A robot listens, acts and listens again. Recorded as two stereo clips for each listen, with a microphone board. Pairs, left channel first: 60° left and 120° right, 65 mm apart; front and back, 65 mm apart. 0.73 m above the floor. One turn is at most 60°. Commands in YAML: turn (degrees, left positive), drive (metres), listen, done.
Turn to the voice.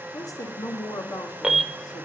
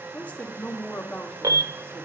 turn: 60
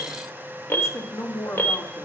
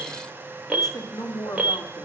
turn: 20
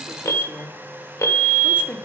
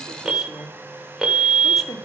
done: "Facing the woman speaking, 2 to 4 m away."